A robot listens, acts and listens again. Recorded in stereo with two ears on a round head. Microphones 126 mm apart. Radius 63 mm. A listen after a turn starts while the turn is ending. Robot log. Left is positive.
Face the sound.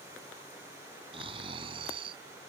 note: The snoring: about 40° right or 140° right.
cmd yaw -40
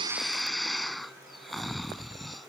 end: Facing the snoring.